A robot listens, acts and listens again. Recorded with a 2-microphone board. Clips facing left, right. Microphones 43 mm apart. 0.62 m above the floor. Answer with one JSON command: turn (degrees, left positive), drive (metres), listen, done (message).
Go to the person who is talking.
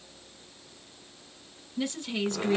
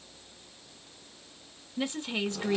{"turn": -20}
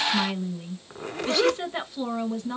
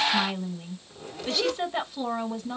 {"drive": 1.0}
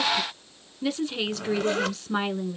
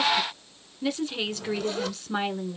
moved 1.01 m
{"drive": 1.0}
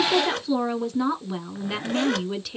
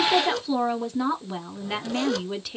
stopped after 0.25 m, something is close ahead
{"done": "I am next to the woman speaking."}